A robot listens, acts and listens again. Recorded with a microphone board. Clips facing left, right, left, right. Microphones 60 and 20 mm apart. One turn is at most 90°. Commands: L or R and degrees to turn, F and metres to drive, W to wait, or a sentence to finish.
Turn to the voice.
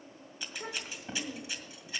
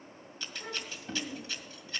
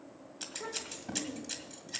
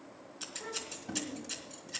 L30
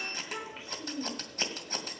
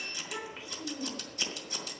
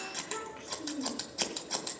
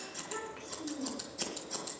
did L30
Facing the child speaking, 2 to 4 m away.